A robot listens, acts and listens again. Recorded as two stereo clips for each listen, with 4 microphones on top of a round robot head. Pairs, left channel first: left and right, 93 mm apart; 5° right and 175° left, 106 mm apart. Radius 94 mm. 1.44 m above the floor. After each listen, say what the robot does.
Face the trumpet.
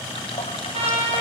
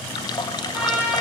Turn 105° right.
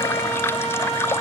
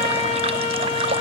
Facing the trumpet.